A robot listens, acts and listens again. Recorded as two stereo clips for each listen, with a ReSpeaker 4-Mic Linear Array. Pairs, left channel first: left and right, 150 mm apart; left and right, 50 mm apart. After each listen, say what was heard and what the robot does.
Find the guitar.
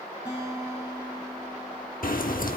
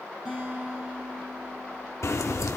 Turn 30° right.
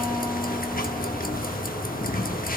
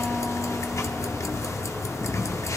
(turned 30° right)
Keep listening.
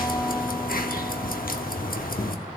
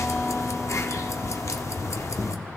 Keep listening.
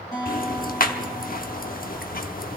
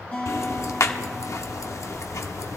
So it is at 25° left. Turn 25° left.
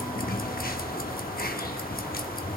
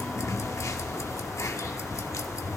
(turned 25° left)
Keep listening.
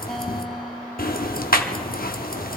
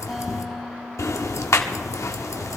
Keep listening.
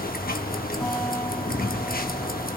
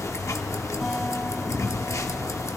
Facing where the guitar came from. I can't hear it now.